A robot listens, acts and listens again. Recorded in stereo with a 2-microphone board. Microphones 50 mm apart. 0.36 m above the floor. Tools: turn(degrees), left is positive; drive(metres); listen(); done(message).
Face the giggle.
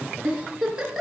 turn(degrees=-30)
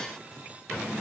listen()
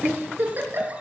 turn(degrees=-140)
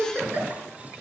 turn(degrees=-35)
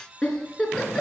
turn(degrees=15)
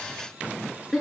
done("Found it: a giggle, straight ahead, 2 to 4 m away.")